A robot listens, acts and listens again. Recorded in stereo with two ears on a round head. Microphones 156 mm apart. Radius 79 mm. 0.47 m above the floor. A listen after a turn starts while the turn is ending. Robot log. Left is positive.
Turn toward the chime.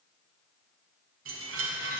cmd yaw -90
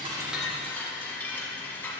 note: So it is at 10° left.
cmd yaw +10
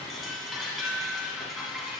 end: Facing the chime, 1 to 2 m away.